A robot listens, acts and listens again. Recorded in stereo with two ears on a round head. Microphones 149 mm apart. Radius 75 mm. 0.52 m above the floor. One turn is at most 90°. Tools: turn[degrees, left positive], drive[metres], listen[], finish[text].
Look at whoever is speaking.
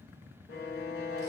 Action: listen[]
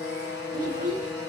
Thought: The child speaking: about 50° right or 130° right.
Action: turn[-50]
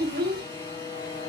Thought: So it is at 70° right.
Action: turn[-70]
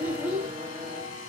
Thought: The child speaking is now 15° right.
Action: turn[-15]
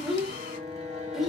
Action: finish[Found it: a child speaking, straight ahead, under 1 m away.]